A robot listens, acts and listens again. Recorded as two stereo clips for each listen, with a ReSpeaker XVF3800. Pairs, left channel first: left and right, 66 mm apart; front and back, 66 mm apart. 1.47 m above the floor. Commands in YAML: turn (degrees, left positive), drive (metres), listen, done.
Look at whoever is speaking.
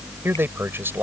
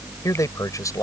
turn: -35
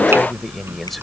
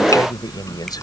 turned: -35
listen: true
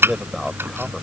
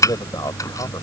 done: "Found it: a man speaking, straight ahead."